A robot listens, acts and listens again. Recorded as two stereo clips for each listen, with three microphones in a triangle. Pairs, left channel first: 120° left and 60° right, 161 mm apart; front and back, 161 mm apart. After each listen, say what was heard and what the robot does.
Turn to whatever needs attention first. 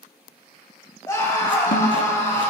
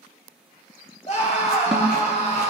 The scream: 50° left. Turn 50° left.
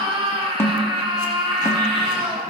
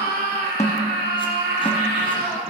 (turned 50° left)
Facing the scream, 2 to 4 m away.